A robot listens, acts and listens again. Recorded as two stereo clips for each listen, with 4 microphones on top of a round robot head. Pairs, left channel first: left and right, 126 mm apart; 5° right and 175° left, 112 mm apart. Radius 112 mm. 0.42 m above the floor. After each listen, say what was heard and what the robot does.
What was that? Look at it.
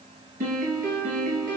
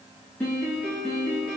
The piano: 90° right. Turn 90° right.
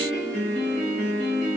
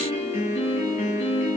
The piano is now 10° left. Turn 10° left.
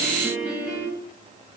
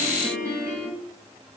Found it: a piano, straight ahead.